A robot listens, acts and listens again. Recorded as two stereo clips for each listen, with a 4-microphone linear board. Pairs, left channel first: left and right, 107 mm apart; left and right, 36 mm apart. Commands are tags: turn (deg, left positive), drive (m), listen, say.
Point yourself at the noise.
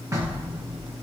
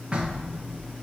<turn deg="-30"/>
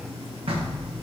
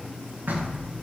<turn deg="-120"/>
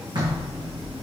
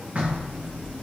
<turn deg="-45"/>
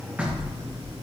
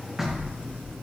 <turn deg="-15"/>
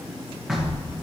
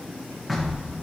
<say>Facing the knocking, 1 to 2 m away.</say>